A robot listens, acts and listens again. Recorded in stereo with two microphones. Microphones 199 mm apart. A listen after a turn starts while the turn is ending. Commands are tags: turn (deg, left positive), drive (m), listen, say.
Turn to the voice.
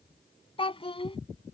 <turn deg="30"/>
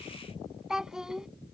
<say>Facing the child speaking.</say>